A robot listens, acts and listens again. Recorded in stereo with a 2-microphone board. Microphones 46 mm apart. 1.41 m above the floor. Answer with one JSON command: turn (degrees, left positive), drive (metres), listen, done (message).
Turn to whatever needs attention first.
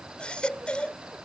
{"turn": 20}
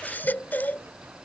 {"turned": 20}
{"turn": 140}
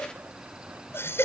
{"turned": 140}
{"turn": 65}
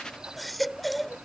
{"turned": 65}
{"done": "Found it: a baby crying, straight ahead."}